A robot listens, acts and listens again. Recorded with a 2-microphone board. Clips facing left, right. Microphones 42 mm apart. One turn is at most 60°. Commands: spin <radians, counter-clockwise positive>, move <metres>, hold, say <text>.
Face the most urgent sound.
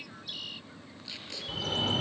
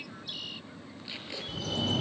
spin 0.61
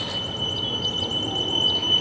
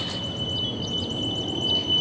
spin 1.05
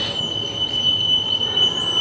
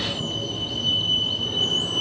spin 1.05
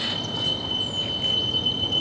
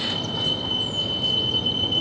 spin -0.17
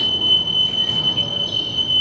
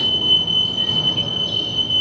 say Facing the fire alarm, over 4 m away.